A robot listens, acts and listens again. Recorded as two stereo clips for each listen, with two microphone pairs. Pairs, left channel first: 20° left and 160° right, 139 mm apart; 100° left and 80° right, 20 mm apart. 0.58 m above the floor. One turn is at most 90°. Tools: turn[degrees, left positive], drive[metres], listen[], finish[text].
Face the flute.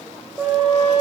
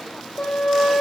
Thought: The flute: 125° left.
Action: turn[90]
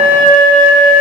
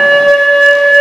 Thought: The flute is now 30° left.
Action: turn[30]
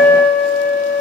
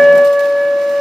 Thought: The flute is now 15° left.
Action: turn[15]
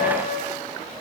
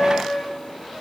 Thought: The flute is now 10° left.
Action: turn[10]
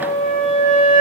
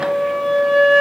Action: finish[Found it: a flute, straight ahead.]